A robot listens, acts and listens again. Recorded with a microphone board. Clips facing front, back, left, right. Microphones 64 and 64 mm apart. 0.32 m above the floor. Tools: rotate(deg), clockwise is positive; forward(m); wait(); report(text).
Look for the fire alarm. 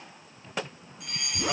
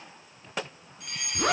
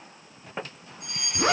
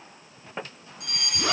rotate(90)
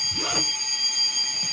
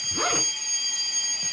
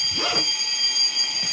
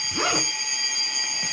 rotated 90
rotate(25)
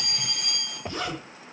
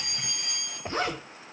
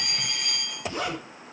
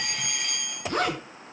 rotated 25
report("Facing the fire alarm.")